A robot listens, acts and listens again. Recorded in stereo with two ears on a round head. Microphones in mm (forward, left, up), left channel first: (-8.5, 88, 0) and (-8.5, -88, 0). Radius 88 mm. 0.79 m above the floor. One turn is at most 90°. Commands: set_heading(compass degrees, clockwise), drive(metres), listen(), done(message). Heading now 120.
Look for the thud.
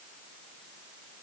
listen()
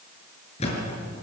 set_heading(85)
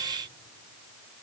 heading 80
listen()
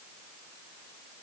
done("I heard a thud, but can't make it out now. It was about 5° right or 105° left.")